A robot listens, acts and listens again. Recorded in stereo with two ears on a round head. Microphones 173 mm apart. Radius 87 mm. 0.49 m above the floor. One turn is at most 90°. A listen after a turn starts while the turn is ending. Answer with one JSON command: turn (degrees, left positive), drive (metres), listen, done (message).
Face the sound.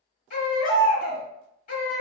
{"turn": 40}
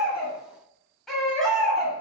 {"done": "Found it: a baby crying, straight ahead."}